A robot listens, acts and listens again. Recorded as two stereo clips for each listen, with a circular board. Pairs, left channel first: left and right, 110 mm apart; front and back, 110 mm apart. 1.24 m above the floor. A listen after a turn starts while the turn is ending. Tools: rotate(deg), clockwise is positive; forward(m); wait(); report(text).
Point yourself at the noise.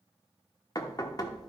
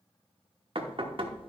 rotate(-145)
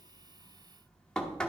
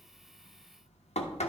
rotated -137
report("Found it: knocking, straight ahead.")